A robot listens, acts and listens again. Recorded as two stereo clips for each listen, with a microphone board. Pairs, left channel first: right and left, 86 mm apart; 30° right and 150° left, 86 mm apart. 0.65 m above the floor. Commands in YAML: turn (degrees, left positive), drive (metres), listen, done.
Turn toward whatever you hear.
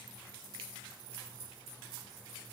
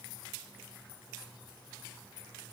listen: true
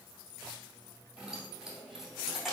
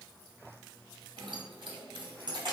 turn: 180
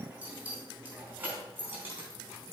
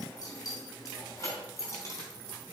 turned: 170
turn: 25
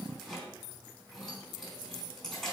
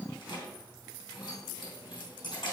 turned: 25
done: "Found it: keys jangling, straight ahead."